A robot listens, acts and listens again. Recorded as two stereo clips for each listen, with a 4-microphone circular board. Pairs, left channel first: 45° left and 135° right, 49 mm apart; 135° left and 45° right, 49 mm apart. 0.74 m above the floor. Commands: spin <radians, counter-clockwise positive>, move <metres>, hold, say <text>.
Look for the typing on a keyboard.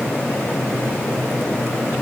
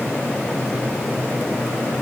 hold
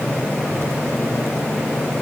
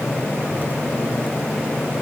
hold
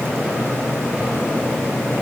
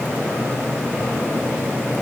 say I can't make out typing on a keyboard to turn to.